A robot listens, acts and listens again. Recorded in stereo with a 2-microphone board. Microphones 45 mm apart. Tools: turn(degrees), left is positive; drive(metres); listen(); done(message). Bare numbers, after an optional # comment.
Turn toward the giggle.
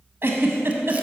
# The giggle: about 55° right or 125° right.
turn(-55)
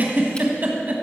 # So it is at 55° right.
turn(-55)
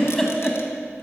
done("Found it: a giggle, straight ahead, 1 to 2 m away.")